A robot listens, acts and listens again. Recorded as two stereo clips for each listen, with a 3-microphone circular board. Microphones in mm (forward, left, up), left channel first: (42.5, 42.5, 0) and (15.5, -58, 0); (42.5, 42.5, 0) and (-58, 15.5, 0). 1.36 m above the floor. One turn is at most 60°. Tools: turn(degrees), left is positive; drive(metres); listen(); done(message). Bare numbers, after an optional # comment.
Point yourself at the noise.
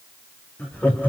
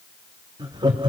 # The laughter: 150° left.
turn(60)
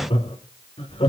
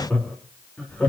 # The laughter is now 90° left.
turn(60)
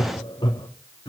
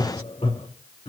# The laughter is now 35° left.
turn(35)
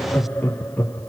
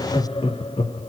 done("Found it: laughter, straight ahead.")